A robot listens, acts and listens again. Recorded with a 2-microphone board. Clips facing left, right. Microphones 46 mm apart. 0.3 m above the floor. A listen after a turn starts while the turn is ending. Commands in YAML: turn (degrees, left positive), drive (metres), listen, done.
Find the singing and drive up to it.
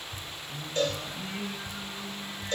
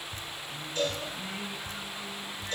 turn: 30
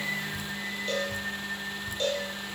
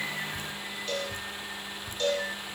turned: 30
turn: -20
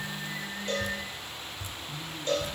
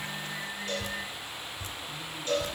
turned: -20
drive: 1.0
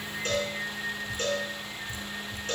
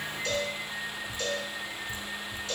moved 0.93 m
drive: 1.0
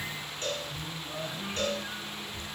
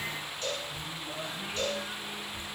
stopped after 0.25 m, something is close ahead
turn: -10
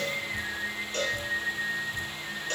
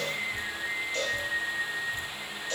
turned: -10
done: "I am next to the singing."